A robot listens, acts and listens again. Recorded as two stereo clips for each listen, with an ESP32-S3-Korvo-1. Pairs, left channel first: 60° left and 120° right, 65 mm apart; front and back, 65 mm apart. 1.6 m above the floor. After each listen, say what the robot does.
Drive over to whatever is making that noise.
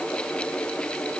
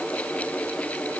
Keep listening.
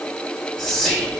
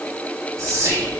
Turn 140° left.
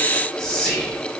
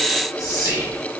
Turn 20° right.
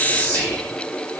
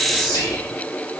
Drive 1.0 m forward.
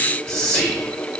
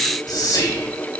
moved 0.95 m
Turn 15° right.
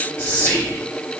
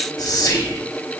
Drive 1.0 m forward.
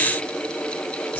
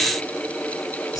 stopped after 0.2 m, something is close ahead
Keep listening.
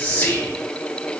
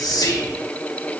I am next to the whispering.